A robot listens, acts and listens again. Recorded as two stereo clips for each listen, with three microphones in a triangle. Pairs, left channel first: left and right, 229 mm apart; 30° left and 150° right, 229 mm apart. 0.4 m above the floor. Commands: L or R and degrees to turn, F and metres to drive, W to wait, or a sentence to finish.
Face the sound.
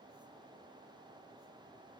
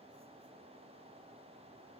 W
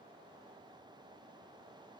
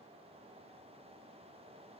W
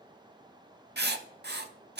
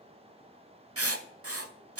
R135
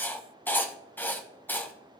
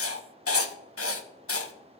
L10
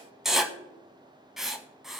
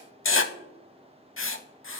Facing the writing.